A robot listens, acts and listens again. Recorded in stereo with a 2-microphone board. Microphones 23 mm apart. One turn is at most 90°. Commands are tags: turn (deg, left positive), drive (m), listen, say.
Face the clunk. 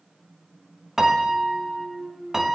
<turn deg="-40"/>
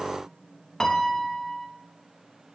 <listen/>
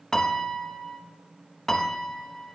<say>I heard a clunk, but can't make it out now. It was about straight ahead or 100° right.</say>